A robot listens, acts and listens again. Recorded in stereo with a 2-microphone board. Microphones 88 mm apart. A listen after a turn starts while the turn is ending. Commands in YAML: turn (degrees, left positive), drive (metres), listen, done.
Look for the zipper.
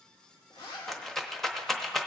turn: 70
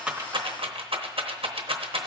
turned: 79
listen: true
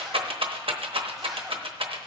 listen: true
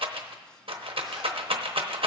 done: "I heard a zipper, but can't make it out now. It was about 10° right or 30° left."